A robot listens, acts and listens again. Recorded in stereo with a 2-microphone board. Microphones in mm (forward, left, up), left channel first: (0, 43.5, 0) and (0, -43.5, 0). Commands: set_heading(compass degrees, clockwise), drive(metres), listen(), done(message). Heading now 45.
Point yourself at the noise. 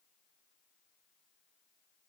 listen()
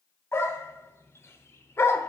set_heading(15)
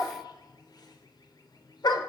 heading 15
set_heading(260)
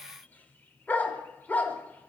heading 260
set_heading(240)
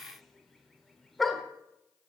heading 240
done("Found it: a dog barking, straight ahead.")